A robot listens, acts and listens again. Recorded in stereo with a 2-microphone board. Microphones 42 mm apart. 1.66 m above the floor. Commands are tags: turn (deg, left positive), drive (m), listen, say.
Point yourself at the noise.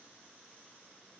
<listen/>
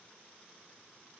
<listen/>
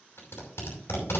<turn deg="90"/>
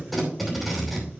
<say>Found it: tape being pulled, straight ahead.</say>